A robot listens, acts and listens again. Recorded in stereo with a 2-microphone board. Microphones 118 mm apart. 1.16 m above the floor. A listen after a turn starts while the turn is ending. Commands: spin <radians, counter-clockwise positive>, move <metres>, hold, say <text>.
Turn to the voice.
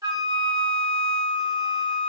hold
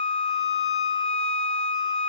hold
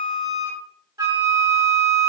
say I can't make out anyone speaking, only a flute.